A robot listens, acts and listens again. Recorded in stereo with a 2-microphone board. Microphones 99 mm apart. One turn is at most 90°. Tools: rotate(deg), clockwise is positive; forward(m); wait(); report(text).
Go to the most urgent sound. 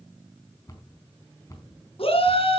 rotate(-70)
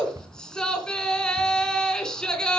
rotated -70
rotate(-10)
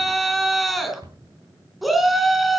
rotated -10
forward(1.0)
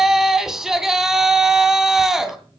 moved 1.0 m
forward(1.0)
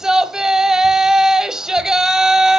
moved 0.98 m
forward(1.0)
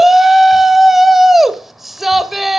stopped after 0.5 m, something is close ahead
report("Arrived at the shout, straight ahead.")